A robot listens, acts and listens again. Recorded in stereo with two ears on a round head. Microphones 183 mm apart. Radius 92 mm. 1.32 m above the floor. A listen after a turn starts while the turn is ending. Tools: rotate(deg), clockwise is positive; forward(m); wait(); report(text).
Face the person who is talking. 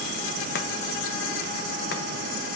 wait()
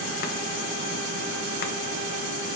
wait()
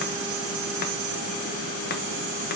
report("I can't make out anyone speaking to turn to.")